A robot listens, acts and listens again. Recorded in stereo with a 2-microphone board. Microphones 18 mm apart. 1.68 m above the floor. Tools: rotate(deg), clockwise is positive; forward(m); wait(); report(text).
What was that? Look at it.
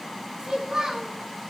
rotate(45)
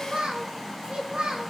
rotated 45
rotate(75)
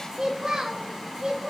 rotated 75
rotate(50)
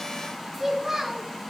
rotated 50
rotate(20)
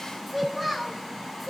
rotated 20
report("Found it: a child speaking, straight ahead.")